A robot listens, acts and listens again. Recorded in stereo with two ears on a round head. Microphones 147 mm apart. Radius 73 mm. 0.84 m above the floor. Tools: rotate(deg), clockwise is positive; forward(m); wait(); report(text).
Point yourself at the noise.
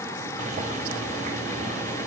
rotate(45)
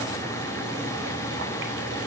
rotate(85)
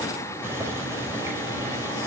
rotate(15)
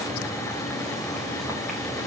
report("Facing the boiling, over 4 m away.")